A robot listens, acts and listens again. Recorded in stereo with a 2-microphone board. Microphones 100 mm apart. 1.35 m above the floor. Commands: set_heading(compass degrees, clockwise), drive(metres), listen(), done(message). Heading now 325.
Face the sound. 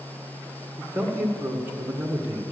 set_heading(345)
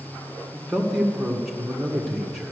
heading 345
done("Found it: a man speaking, straight ahead.")